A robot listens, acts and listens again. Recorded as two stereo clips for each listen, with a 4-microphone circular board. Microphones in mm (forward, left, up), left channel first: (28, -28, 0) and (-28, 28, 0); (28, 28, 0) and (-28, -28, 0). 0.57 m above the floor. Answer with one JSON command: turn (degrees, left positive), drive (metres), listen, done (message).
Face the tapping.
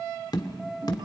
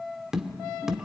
{"turn": -50}
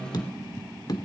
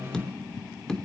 {"turn": -35}
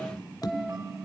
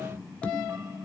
{"turn": -25}
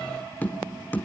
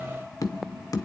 {"turn": 15}
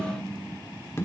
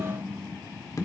{"done": "Facing the tapping."}